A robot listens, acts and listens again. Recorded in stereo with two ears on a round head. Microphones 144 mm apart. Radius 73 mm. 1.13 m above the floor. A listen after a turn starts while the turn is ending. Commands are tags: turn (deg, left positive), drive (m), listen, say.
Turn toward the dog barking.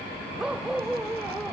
<turn deg="-30"/>
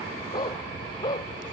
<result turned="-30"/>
<turn deg="25"/>
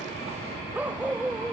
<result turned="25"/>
<turn deg="-10"/>
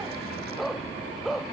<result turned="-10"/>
<say>Facing the dog barking.</say>